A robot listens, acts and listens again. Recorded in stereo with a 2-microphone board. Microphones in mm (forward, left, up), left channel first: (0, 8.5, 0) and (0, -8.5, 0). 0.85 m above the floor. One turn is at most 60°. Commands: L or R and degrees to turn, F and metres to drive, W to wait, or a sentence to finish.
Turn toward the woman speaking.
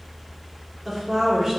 R25
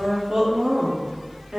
R60
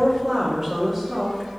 R10
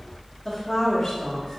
L20
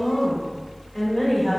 Facing the woman speaking, 1 to 2 m away.